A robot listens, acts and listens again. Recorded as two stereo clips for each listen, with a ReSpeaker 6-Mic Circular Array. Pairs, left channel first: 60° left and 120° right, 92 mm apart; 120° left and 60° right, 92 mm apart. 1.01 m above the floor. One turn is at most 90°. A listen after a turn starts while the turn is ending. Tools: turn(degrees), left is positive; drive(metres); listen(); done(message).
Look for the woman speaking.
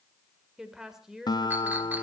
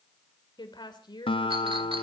turn(degrees=90)
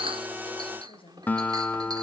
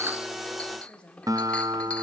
turn(degrees=40)
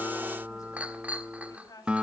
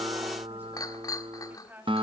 turn(degrees=10)
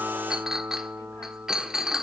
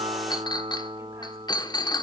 listen()
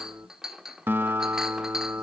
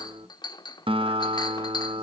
listen()
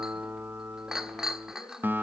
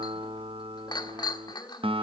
done("Facing where the woman speaking came from. I can't hear it now.")